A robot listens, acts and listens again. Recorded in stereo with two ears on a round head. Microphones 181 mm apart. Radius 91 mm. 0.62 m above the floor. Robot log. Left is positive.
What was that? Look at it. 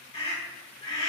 note: The scream: about 25° left or 155° left.
cmd yaw +25
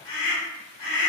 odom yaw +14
note: So it is at 140° left.
cmd yaw +140
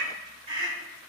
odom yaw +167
note: The scream is now 30° right.
cmd yaw -30
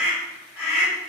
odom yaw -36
end: Found it: a scream, straight ahead.